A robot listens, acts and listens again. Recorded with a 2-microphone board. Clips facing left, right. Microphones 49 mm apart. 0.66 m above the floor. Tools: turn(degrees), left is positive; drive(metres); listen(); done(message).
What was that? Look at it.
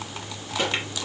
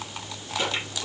turn(degrees=40)
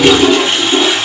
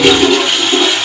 done("Found it: a toilet flushing, straight ahead, over 4 m away.")